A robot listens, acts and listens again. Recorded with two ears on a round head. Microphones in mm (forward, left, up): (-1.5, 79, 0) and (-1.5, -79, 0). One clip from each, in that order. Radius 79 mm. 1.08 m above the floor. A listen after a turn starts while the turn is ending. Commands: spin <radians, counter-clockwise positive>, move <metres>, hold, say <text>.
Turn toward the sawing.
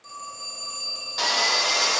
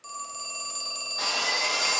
spin 1.13
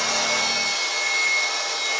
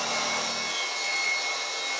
spin 0.87
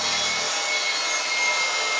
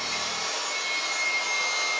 spin 0.26
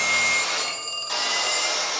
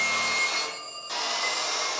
say Found it: sawing, straight ahead, 2 to 4 m away.